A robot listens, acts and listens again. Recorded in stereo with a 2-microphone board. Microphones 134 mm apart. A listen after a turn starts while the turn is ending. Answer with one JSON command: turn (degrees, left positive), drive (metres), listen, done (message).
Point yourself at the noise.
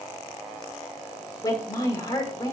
{"turn": 30}
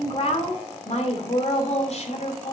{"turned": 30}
{"turn": 115}
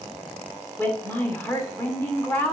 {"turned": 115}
{"turn": 15}
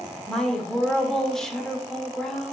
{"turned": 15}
{"done": "Found it: a woman speaking, straight ahead, 2 to 4 m away."}